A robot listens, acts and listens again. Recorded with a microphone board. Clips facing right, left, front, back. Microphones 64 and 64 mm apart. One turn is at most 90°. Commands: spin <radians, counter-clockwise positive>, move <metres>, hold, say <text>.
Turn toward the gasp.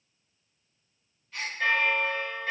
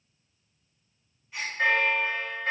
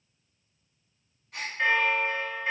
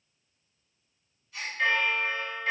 spin 0.26
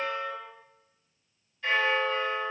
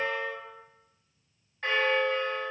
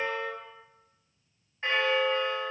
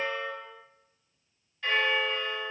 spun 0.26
say Facing where the gasp came from. I can't hear it now.